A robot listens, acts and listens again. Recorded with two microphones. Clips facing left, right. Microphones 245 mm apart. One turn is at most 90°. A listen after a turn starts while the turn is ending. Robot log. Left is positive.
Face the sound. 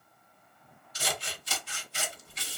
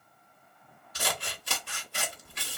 note: The scissors: about 60° right or 120° right.
cmd yaw -60
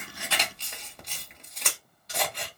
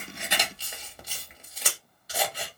end: Found it: scissors, straight ahead.